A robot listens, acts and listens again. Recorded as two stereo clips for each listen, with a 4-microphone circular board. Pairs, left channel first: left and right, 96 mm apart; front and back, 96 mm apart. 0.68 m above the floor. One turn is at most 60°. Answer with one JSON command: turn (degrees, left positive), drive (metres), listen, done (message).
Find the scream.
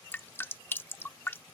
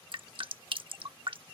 {"listen": true}
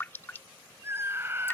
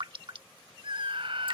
{"turn": -60}
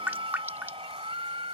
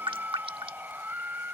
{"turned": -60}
{"turn": -60}
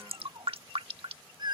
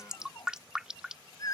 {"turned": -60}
{"turn": -50}
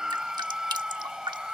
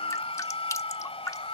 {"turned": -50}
{"done": "Found it: a scream, straight ahead."}